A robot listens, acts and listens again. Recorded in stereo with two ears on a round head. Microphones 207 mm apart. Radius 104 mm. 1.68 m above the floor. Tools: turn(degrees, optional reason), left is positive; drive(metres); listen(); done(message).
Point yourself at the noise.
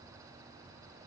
listen()
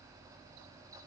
listen()
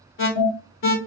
turn(degrees=60, reason="The alarm: about 60° left or 120° left.")
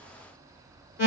turn(degrees=55, reason="So it is at 55° left.")
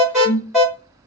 done("Facing the alarm.")